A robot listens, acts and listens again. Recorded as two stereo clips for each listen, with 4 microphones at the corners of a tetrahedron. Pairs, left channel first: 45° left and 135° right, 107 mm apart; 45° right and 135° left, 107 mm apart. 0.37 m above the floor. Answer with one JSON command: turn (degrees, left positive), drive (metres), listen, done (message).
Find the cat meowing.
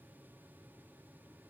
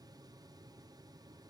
{"listen": true}
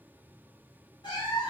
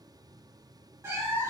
{"turn": 70}
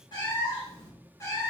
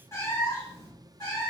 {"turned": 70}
{"turn": -10}
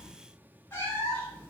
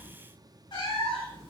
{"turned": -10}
{"turn": -25}
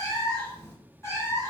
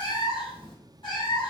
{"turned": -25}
{"turn": -15}
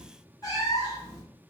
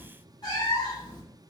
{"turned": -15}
{"done": "Found it: a cat meowing, straight ahead."}